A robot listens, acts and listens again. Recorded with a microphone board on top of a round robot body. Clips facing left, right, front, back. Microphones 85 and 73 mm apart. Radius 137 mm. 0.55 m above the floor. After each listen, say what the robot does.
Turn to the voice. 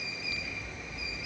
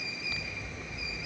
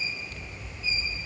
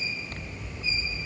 Keep listening.
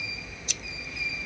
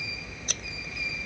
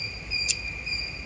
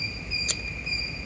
Keep listening.
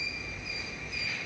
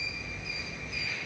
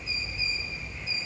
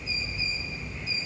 I can't make out anyone speaking to turn to.